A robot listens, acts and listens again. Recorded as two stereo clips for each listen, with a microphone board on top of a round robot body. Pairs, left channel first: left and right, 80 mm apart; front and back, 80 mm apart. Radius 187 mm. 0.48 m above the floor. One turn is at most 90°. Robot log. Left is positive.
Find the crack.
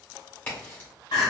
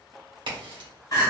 note: The crack: 160° left.
cmd yaw +90
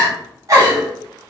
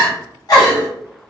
note: Nothing new. It was at 70° left.
cmd yaw +70
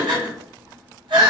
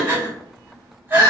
end: I heard a crack from this way, but can't make it out now.